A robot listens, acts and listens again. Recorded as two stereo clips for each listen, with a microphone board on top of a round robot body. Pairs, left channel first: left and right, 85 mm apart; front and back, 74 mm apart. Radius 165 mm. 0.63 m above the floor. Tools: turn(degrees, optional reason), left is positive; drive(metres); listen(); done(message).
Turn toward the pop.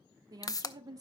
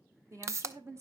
turn(degrees=135, reason="The pop: 135° left.")
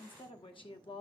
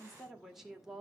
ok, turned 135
done("I heard a pop from this way, but can't make it out now.")